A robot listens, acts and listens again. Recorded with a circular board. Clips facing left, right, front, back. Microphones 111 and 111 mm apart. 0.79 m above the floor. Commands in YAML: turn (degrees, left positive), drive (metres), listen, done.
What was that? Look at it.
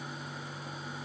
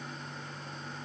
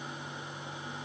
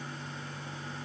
listen: true
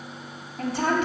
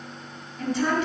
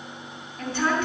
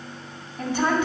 turn: 105
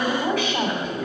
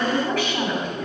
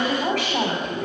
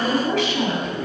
turn: 20
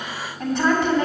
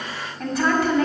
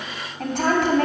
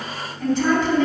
done: "Found it: a woman speaking, straight ahead, 2 to 4 m away."